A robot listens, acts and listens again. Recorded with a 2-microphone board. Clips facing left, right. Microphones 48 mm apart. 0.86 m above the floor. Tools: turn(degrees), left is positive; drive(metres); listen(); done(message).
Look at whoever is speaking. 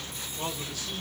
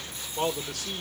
turn(degrees=-75)
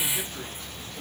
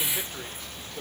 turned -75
turn(degrees=-25)
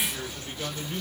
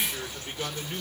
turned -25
turn(degrees=-25)
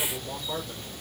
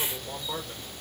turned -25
done("Facing the man speaking, 2 to 4 m away.")